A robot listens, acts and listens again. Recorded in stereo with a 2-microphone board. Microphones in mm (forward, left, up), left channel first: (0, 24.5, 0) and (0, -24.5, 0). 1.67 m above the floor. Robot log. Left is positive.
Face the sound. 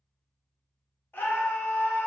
note: The scream: about 50° left or 130° left.
cmd yaw +50
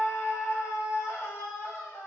note: So it is at 80° left.
cmd yaw +80
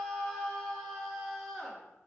end: Facing the scream, 1 to 2 m away.